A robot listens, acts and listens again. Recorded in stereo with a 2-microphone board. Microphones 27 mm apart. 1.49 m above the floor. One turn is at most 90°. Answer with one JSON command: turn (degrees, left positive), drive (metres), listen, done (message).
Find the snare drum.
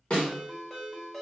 {"turn": 40}
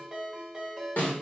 {"turn": 90}
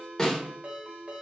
{"turn": 20}
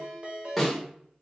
{"done": "Found it: a snare drum, straight ahead."}